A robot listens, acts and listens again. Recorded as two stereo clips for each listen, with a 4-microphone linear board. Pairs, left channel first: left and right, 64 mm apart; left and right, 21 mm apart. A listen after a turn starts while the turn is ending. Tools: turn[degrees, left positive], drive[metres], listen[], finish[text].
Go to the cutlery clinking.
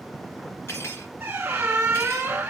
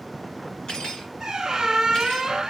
Thought: The cutlery clinking: about 45° left or 135° left.
Action: turn[45]
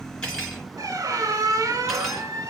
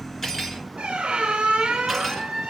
Action: listen[]
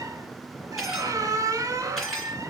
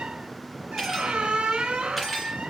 Action: drive[1.0]
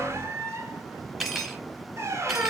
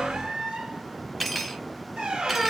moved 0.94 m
Action: drive[1.0]
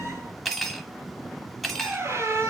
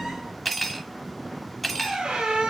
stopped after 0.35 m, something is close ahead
Action: finish[I am next to the cutlery clinking.]